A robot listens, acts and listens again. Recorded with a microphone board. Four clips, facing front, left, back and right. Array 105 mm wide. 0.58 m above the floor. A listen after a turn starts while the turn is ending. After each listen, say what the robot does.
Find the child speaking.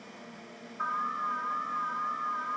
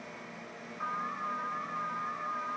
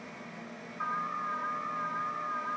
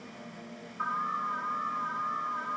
Keep listening.
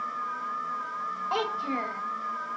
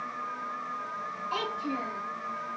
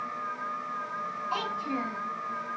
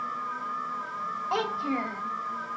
Turn 45° right.
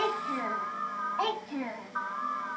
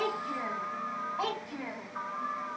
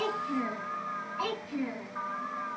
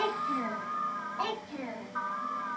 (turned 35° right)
Turn 10° left.
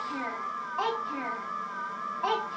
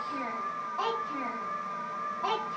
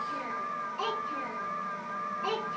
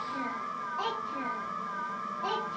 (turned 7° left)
Facing the child speaking.